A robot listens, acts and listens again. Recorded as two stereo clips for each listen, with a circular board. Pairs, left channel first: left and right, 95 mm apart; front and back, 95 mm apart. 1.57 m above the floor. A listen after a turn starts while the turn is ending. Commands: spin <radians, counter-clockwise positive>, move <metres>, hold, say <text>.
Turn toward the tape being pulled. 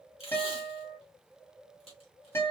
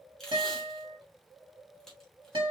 spin 1.48
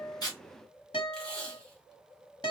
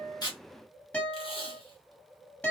spin 0.17
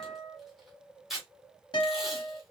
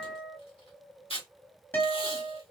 say Found it: tape being pulled, straight ahead.